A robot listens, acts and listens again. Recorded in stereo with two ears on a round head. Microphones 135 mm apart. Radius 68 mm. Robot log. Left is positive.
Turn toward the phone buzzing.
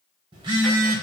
note: The phone buzzing: about 35° right or 145° right.
cmd yaw -35
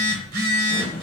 note: So it is at 110° right.
cmd yaw -110
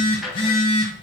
note: The phone buzzing is now 35° left.
cmd yaw +35
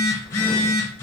note: The phone buzzing is now 20° left.
cmd yaw +20
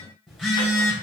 end: Found it: a phone buzzing, straight ahead, 1 to 2 m away.